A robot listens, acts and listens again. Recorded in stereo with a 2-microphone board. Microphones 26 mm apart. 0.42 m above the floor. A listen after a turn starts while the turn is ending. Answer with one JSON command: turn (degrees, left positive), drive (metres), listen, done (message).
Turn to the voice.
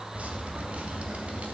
{"listen": true}
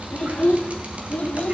{"turn": 60}
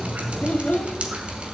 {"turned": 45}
{"turn": 65}
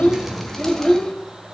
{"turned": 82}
{"turn": 25}
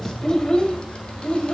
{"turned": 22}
{"turn": 30}
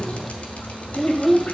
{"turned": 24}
{"done": "Found it: a child speaking, straight ahead, 1 to 2 m away."}